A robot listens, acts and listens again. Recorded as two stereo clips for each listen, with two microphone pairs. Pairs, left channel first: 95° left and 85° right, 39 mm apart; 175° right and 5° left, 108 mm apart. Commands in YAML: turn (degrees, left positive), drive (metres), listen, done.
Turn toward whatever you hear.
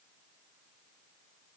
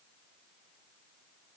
listen: true
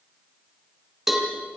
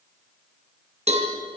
done: "Facing the cowbell, 2 to 4 m away."